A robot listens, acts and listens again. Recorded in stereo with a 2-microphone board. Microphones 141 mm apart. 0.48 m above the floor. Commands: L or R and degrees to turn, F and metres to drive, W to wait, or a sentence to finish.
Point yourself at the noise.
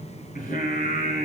L90
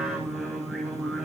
Found it: singing, straight ahead.